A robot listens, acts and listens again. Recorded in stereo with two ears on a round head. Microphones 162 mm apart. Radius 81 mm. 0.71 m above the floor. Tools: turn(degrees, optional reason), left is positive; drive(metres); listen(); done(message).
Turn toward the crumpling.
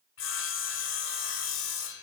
listen()
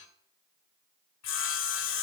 listen()
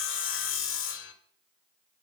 done("I can't make out crumpling to turn to.")